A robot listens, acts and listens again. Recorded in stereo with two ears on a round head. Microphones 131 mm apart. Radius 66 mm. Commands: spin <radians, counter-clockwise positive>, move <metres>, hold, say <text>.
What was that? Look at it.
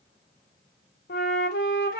spin 1.57
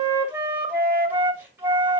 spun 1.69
spin -0.26
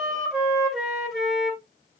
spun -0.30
say Found it: a flute, straight ahead.